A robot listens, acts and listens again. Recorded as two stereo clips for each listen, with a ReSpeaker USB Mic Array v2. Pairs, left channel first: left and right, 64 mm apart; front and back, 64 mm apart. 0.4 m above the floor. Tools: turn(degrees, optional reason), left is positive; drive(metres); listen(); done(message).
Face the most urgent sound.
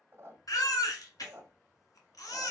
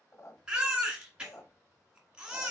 turn(degrees=105, reason="The baby crying: 105° left.")
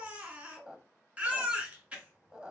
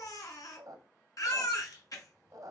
turn(degrees=-20, reason="The baby crying is now 20° right.")
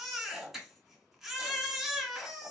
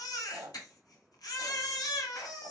done("Found it: a baby crying, straight ahead, 1 to 2 m away.")